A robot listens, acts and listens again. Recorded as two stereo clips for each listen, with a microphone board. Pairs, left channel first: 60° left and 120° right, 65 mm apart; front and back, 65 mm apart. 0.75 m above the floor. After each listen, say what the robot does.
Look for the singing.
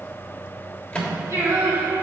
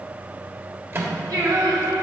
Turn 165° right.
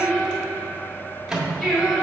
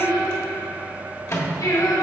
Turn 25° right.
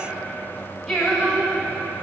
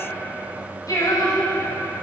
Turn 15° right.
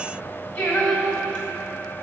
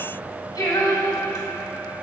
Found it: singing, straight ahead.